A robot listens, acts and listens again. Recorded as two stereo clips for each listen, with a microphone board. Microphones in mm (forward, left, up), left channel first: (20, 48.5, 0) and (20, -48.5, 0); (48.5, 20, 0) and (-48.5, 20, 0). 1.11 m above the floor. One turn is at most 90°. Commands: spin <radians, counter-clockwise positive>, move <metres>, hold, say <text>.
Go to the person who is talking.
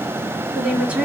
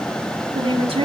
spin -1.57
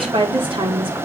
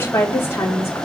spin -1.13
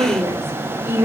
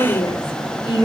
spin -0.44
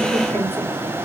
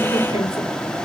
hold
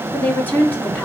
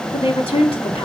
spin 0.35
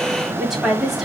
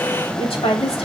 move 1.0
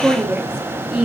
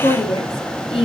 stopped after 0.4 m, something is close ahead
spin -0.17
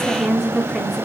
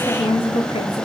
say Something is in my way. I am facing the woman speaking but have not reached it.